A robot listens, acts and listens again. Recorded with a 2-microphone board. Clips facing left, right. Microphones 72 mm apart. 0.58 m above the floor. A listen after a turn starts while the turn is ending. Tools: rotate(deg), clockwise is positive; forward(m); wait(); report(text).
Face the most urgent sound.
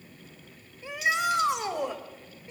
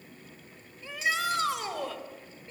rotate(-20)
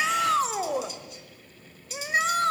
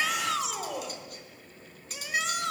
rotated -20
rotate(-140)
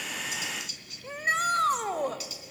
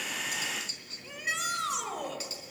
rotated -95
rotate(-45)
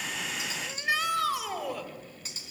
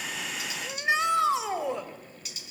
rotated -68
rotate(25)
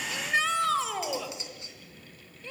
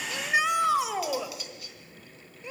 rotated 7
rotate(15)
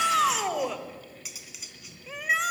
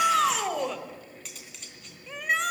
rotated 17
report("Facing the shout, 2 to 4 m away.")